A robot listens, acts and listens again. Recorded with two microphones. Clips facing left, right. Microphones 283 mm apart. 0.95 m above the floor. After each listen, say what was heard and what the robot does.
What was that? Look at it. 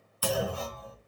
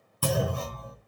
The clunk: about 55° right or 125° right. Turn 55° right.
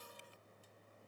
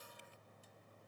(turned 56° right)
Keep listening.
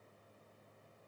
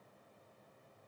I heard a clunk, but can't make it out now. It was about straight ahead or 70° right.